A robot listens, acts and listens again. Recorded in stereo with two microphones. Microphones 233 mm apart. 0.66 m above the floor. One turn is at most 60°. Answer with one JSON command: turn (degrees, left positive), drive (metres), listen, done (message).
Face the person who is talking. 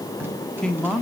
{"turn": 30}
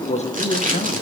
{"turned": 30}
{"turn": 60}
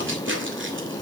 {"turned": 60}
{"turn": 60}
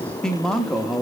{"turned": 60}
{"done": "Facing the man speaking."}